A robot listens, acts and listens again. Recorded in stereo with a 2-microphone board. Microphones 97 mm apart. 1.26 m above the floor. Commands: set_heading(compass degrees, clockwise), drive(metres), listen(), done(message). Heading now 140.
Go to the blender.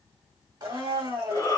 set_heading(185)
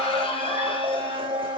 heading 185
set_heading(275)
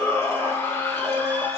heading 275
set_heading(285)
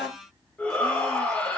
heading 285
drive(1.0)
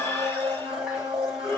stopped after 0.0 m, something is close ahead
set_heading(295)
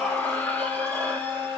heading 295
done("Blocked. The blender is further on, straight ahead.")